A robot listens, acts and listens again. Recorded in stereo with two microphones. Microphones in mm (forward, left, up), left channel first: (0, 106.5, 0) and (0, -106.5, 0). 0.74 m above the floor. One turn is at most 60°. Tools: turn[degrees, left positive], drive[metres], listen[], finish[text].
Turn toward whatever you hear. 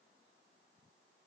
Action: listen[]
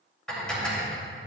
Action: turn[30]
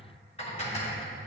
Thought: So it is at 150° left.
Action: turn[60]
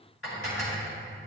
Thought: The dishes clattering is now 80° left.
Action: turn[60]
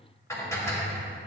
Thought: The dishes clattering is now 15° left.
Action: turn[15]
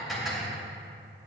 Action: finish[Found it: dishes clattering, straight ahead, 2 to 4 m away.]